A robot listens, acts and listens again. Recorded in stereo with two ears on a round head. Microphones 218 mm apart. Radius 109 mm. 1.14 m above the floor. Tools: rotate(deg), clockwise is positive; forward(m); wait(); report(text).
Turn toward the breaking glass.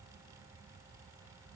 wait()
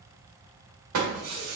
rotate(65)
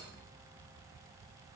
wait()
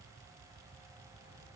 report("I heard breaking glass, but can't make it out now. It was about straight ahead or 50° right.")